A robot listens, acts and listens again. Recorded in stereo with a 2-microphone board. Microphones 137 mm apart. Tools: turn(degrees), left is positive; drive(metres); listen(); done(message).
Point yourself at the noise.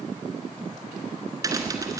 turn(degrees=-25)
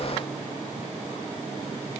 listen()
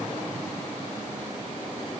done("I heard a crack, but can't make it out now. It was about straight ahead or 130° right.")